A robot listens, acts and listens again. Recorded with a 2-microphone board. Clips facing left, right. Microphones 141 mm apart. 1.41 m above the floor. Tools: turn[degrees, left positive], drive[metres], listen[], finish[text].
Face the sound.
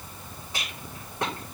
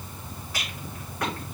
Thought: The rattle: about 25° left or 155° left.
Action: turn[25]
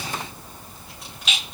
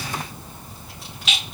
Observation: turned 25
Action: finish[Found it: a rattle, straight ahead.]